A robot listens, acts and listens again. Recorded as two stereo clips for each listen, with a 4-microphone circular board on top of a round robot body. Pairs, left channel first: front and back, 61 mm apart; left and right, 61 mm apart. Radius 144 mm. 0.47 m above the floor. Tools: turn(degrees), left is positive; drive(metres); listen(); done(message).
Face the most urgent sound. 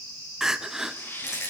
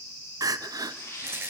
turn(degrees=-100)
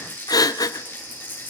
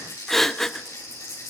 done("Facing the crying.")